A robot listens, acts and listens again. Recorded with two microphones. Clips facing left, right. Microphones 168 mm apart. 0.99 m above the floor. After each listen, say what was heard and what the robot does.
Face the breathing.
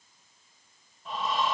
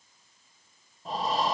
The breathing: about 35° right or 145° right. Turn 35° right.
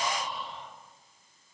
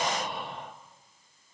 So it is at 100° right. Turn 100° right.
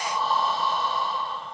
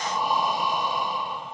The breathing is now 20° right. Turn 20° right.
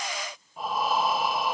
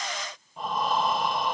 Facing the breathing.